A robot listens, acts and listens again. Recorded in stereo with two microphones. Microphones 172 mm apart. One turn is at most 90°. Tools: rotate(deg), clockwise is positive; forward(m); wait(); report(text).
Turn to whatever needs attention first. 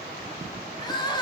rotate(-25)
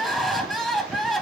report("Found it: crying, straight ahead, 1 to 2 m away.")